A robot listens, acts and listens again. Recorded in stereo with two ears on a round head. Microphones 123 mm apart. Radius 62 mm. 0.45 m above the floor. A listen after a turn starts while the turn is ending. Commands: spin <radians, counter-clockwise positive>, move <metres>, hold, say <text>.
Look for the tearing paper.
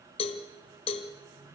hold
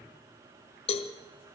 hold
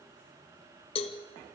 say I can't make out tearing paper, only a cowbell.